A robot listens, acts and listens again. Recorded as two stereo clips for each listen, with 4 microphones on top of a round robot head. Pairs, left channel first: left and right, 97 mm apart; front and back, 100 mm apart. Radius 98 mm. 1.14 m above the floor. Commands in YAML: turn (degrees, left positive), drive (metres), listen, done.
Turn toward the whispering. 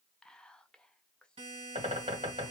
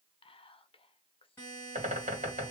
turn: 10
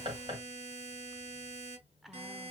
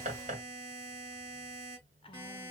listen: true
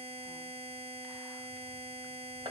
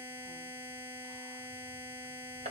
listen: true
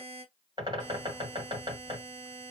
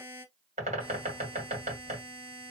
done: "I heard whispering from this way, but can't make it out now."